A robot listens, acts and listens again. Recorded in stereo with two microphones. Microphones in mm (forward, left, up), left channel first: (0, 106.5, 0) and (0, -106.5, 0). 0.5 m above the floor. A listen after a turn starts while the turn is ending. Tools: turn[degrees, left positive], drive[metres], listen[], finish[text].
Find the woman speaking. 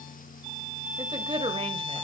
Thought: The woman speaking: about 25° right or 155° right.
Action: turn[-25]
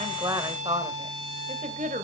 Thought: The woman speaking: about 40° right or 140° right.
Action: turn[-40]
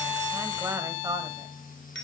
Thought: So it is at 20° right.
Action: turn[-20]
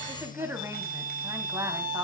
Thought: The woman speaking is now 15° right.
Action: turn[-15]
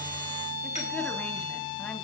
Action: listen[]
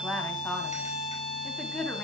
Action: finish[Facing the woman speaking, 2 to 4 m away.]